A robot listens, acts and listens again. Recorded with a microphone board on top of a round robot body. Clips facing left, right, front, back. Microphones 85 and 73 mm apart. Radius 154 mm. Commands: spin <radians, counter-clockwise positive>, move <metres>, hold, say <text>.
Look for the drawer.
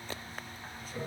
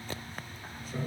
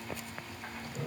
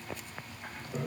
hold
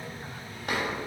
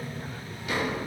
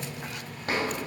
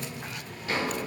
spin 0.79
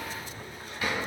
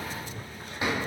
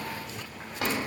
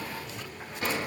spin -0.44
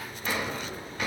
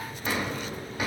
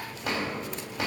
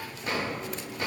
spin -0.26
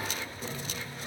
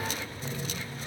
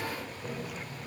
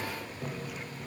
hold
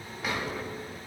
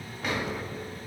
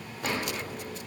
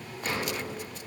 say Facing the drawer, 2 to 4 m away.